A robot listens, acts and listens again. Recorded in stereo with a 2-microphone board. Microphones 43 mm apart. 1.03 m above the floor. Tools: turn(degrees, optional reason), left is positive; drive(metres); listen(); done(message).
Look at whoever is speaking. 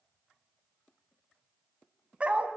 listen()
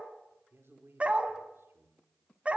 turn(degrees=-70, reason="The man speaking: about 70° right or 110° right.")
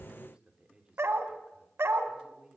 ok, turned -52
turn(degrees=-25, reason="So it is at 25° right.")
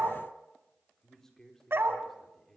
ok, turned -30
done("Facing the man speaking.")